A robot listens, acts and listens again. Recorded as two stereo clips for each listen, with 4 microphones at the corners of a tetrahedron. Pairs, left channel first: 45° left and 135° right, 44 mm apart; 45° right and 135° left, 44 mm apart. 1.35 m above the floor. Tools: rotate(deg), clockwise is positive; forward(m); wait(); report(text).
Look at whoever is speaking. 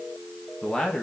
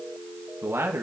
rotate(-115)
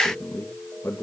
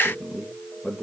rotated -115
rotate(-25)
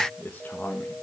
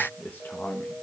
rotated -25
report("Found it: a man speaking, straight ahead.")